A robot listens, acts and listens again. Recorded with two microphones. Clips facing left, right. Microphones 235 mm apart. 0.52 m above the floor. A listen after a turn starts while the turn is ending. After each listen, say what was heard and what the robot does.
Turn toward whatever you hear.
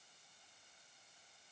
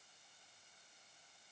Keep listening.
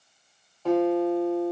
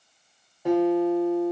Turn 30° right.
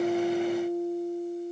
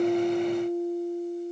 So it is at 15° left. Turn 15° left.
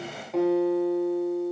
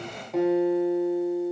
Facing the guitar, under 1 m away.